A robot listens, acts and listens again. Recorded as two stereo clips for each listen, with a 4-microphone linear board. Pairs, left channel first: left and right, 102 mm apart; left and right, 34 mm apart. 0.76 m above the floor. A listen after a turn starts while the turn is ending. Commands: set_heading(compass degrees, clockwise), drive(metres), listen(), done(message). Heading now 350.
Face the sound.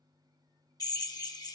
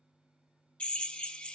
set_heading(310)
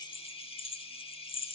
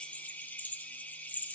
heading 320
set_heading(210)
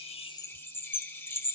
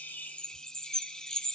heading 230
set_heading(210)
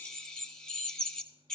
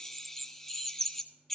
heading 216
done("Facing the drill, under 1 m away.")